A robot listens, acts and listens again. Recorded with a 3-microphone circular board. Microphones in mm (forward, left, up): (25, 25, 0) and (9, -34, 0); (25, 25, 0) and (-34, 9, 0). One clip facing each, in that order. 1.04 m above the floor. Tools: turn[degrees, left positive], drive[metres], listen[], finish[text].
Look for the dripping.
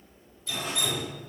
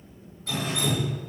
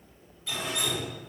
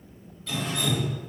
Thought: The dripping: 65° right.
Action: turn[-65]
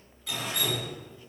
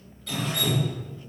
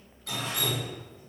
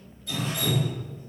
Action: finish[Facing the dripping.]